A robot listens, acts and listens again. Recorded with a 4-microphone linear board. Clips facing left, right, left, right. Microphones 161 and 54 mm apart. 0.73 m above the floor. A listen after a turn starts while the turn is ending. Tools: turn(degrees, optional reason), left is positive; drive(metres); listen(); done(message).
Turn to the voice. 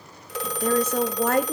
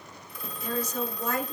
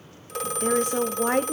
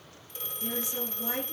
turn(degrees=60, reason="The woman speaking: about 60° left or 120° left.")
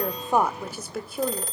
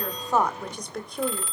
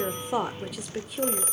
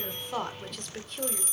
done("Facing the woman speaking, 1 to 2 m away.")